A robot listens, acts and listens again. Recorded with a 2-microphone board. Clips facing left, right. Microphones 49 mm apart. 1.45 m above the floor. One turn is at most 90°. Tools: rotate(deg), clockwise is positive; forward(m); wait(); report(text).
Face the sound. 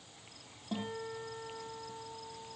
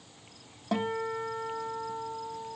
rotate(90)
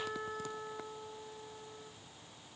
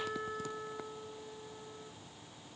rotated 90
report("Found it: a guitar, straight ahead, 2 to 4 m away.")